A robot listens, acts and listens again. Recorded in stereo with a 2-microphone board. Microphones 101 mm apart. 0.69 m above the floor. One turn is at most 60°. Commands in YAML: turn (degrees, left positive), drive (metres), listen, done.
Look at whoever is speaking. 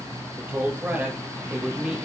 turn: -30
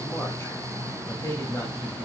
turn: 35
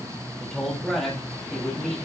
turn: 10
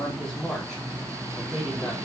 done: "Found it: a man speaking, straight ahead."